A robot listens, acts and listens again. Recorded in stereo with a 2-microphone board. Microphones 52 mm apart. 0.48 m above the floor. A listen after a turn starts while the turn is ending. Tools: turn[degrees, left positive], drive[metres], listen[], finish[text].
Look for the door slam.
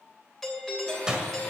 Action: turn[-30]
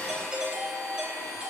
Action: listen[]
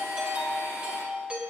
Action: finish[I heard a door slam, but can't make it out now. It was about 15° left or 135° right.]